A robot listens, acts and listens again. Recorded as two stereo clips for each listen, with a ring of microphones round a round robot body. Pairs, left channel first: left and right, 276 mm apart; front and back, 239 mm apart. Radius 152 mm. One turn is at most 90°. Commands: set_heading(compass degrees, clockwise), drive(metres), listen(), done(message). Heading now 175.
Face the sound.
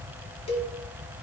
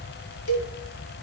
set_heading(155)
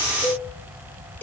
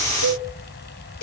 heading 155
done("Found it: a cowbell, straight ahead.")